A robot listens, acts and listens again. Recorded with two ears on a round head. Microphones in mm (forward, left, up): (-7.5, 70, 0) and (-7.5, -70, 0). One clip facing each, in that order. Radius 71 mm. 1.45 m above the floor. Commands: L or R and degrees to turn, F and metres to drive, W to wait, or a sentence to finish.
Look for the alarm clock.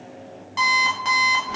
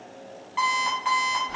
L45
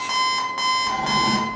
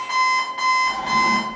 L70
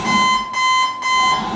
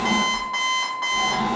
L20
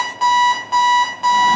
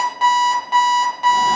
Found it: an alarm clock, straight ahead, under 1 m away.